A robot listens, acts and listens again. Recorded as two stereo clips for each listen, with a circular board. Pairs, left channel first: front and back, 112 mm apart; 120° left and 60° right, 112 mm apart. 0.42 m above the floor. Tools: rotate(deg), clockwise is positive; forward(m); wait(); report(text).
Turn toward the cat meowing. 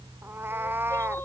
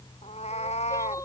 rotate(-110)
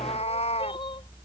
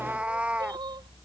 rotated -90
rotate(-20)
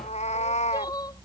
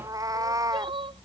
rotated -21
report("Facing the cat meowing.")